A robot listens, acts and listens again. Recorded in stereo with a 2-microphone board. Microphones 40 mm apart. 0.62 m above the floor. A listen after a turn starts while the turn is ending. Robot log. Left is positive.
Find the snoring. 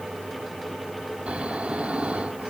note: The snoring: about 30° right or 150° right.
cmd yaw -30
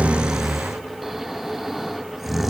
end: Found it: snoring, straight ahead, 1 to 2 m away.